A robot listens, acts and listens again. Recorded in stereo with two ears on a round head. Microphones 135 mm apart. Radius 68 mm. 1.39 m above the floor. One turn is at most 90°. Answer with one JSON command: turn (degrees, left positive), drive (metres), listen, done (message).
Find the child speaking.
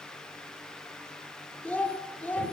{"turn": 30}
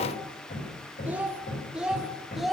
{"turn": 30}
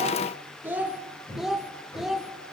{"done": "Facing the child speaking."}